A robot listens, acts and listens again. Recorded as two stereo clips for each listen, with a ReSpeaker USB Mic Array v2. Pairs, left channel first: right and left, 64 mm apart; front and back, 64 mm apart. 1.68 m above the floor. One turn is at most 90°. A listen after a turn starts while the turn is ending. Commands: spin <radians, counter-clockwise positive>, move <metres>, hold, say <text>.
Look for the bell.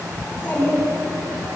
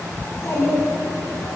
hold
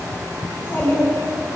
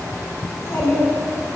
hold
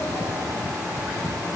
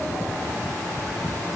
say I can't make out a bell to turn to.